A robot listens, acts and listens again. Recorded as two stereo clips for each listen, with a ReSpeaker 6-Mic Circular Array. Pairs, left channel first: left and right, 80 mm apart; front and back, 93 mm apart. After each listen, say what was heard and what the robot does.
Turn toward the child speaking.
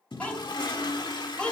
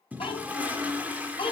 The child speaking: 15° left. Turn 15° left.
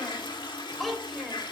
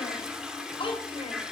Facing the child speaking, 2 to 4 m away.